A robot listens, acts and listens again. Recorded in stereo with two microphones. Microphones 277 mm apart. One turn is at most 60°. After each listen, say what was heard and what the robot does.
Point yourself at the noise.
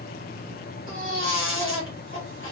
The baby crying: about 45° left or 135° left. Turn 45° left.
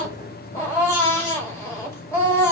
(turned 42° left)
So it is at 10° left. Turn 10° left.
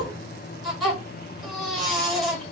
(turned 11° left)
Facing the baby crying, 1 to 2 m away.